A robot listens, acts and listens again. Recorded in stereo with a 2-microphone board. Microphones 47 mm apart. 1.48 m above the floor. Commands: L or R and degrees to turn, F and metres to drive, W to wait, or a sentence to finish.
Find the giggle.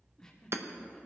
L30
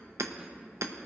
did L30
W
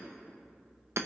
W
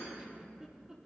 R15
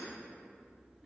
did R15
W
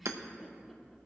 Facing the giggle, 1 to 2 m away.